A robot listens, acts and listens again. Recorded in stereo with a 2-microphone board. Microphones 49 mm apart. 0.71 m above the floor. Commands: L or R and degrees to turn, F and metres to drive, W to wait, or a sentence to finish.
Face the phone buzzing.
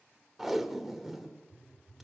R30
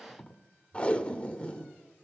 W
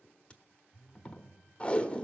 R140
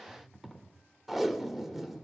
L20
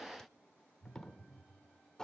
Facing the phone buzzing, 1 to 2 m away.